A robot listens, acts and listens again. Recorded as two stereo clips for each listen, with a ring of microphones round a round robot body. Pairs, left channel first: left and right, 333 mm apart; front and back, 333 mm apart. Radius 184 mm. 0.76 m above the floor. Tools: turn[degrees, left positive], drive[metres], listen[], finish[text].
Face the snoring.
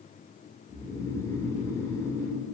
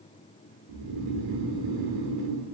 Thought: The snoring: 170° left.
Action: turn[170]
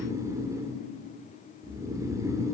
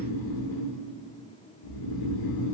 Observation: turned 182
Thought: The snoring is now 10° right.
Action: turn[-10]
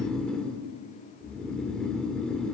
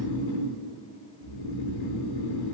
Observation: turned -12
Action: finish[Found it: snoring, straight ahead, 2 to 4 m away.]